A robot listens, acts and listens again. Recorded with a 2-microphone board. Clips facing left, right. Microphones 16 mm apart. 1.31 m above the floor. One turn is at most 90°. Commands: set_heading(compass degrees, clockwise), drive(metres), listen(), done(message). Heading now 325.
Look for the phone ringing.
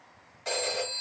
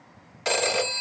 set_heading(20)
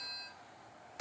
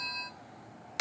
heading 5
set_heading(90)
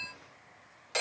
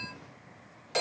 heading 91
done("Found it: a phone ringing, straight ahead, 1 to 2 m away.")